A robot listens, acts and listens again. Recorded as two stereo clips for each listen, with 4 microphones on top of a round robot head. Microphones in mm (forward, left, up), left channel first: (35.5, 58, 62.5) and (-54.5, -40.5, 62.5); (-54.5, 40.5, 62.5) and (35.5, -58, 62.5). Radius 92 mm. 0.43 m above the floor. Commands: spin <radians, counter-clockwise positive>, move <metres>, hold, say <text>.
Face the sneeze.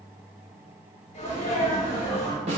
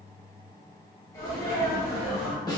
spin 1.22
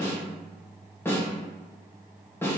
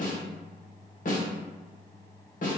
say Facing where the sneeze came from. I can't hear it now.